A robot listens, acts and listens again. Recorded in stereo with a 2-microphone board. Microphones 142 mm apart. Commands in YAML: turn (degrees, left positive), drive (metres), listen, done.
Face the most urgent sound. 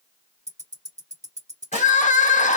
turn: 60
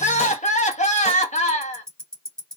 turn: 60
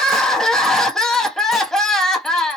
done: "Found it: crying, straight ahead."